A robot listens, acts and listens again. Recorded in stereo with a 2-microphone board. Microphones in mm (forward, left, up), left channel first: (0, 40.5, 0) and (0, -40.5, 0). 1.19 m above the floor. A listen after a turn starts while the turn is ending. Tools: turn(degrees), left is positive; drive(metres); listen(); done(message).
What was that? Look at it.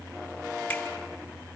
listen()
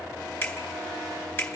turn(degrees=30)
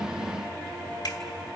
turn(degrees=115)
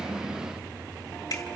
turn(degrees=50)
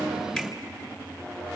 listen()
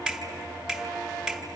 turn(degrees=-10)
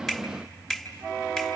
done("Facing the finger snap, 2 to 4 m away.")